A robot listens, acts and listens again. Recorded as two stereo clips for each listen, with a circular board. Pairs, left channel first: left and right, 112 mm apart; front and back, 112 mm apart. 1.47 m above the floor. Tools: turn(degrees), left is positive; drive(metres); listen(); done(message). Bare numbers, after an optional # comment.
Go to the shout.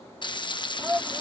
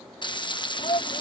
# The shout: 15° right.
turn(-15)
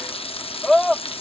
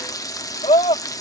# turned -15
drive(1.0)
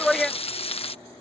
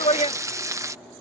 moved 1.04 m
drive(1.0)
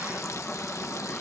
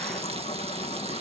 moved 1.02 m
listen()
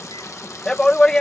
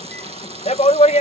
drive(1.0)
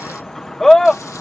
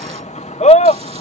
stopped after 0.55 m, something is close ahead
done("Arrived at the shout, straight ahead.")